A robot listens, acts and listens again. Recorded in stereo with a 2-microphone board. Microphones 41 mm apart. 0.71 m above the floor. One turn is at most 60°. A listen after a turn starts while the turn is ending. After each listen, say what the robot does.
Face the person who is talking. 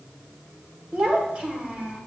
Turn 25° right.
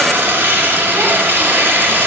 Keep listening.
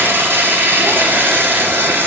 Keep listening.
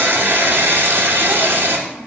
Turn 60° right.
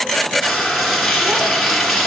Turn 60° right.
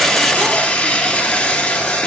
Keep listening.
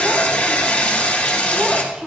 Turn 15° right.
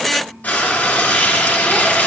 Keep listening.
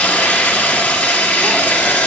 Keep listening.
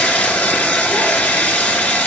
Facing where the child speaking came from. I can't hear it now.